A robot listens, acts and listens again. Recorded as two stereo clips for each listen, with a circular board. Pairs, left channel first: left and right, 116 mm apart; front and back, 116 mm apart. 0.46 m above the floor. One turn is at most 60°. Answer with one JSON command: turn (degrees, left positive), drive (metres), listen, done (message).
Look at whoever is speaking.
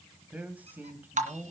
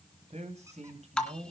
{"turn": -60}
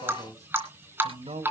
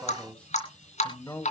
{"turn": -60}
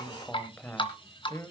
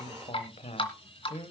{"turn": 25}
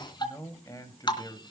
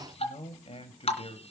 {"turn": 35}
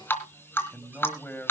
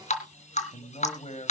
{"turn": 15}
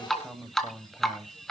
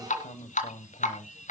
{"done": "Facing the man speaking."}